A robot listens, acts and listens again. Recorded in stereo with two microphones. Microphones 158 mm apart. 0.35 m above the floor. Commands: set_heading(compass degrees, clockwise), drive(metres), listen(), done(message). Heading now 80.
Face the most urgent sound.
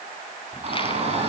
set_heading(120)
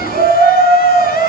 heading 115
set_heading(215)
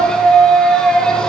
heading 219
done("Found it: a shout, straight ahead, 2 to 4 m away.")